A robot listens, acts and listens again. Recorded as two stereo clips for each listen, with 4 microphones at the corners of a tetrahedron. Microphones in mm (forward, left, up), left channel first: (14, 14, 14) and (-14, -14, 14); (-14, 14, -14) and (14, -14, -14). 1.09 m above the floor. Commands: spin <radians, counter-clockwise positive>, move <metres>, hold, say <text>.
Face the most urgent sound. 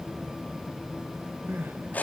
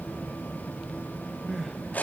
spin -2.36
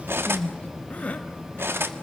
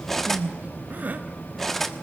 say Facing the crying, 1 to 2 m away.